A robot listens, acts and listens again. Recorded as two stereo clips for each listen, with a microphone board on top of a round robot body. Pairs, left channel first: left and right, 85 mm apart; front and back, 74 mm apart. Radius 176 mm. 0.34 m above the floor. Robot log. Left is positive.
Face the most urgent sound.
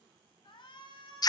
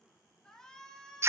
note: The shout: 80° left.
cmd yaw +80
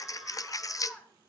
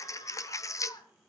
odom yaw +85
end: Facing the shout.